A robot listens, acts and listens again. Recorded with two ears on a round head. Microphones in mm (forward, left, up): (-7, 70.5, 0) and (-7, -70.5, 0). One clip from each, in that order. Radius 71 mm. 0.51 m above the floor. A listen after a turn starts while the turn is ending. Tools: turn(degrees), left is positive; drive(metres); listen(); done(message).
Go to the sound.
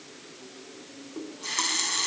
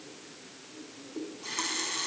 turn(degrees=30)
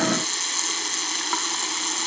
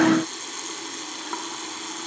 turn(degrees=125)
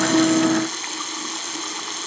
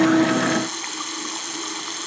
drive(metres=1.0)
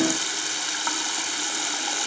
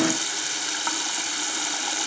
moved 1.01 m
drive(metres=1.0)
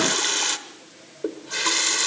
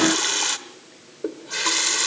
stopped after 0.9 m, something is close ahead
done("I am next to the running tap.")